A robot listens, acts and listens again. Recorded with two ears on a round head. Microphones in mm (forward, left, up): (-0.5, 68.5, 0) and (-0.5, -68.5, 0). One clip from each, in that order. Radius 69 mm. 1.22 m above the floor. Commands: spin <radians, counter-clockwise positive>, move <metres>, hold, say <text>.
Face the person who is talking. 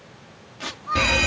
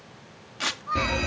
spin 0.52
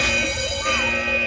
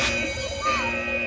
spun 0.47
hold
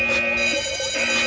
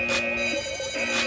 hold
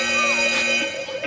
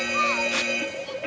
say I heard a child speaking, but can't make it out now. It was about 20° right or 145° left.